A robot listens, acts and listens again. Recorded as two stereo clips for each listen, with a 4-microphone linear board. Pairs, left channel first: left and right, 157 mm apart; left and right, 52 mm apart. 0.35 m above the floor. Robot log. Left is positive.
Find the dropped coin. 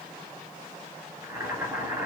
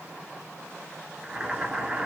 cmd idle
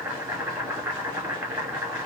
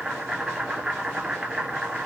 cmd idle
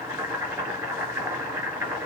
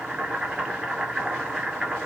end: I can't make out a dropped coin to turn to.